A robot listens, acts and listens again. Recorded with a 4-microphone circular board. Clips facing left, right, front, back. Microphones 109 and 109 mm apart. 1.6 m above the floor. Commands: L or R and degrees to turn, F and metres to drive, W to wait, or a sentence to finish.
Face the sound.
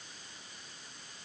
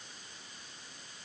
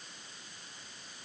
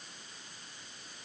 W
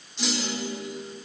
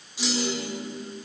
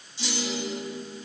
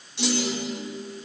R175
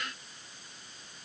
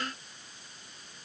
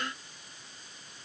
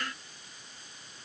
Facing where the clunk came from. I can't hear it now.